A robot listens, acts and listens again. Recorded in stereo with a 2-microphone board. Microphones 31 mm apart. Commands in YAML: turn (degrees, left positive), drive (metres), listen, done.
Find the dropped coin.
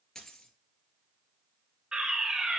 turn: 20
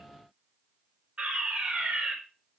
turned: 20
listen: true
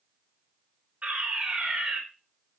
done: "I heard a dropped coin, but can't make it out now. It was about straight ahead or 140° left."